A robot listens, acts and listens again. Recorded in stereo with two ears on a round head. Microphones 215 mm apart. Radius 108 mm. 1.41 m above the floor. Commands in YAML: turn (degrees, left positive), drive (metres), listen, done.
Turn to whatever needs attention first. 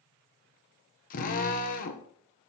listen: true
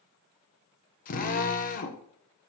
listen: true
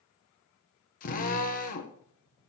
done: "I can't make out anything urgent, only a drill."